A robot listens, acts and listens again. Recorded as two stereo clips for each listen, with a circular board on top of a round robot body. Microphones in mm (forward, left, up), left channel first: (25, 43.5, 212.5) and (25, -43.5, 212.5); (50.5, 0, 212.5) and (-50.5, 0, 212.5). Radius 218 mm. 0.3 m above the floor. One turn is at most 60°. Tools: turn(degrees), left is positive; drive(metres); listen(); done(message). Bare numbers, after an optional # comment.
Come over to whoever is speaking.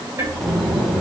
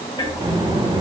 # The child speaking: straight behind.
turn(60)
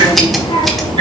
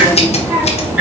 # The child speaking is now 115° left.
turn(60)
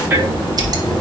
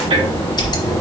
# The child speaking is now 65° left.
turn(60)
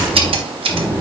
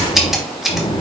# The child speaking is now 20° left.
turn(20)
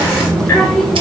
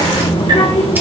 drive(1.0)
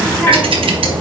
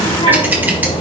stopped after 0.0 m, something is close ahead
done("Blocked. The child speaking is further on, straight ahead.")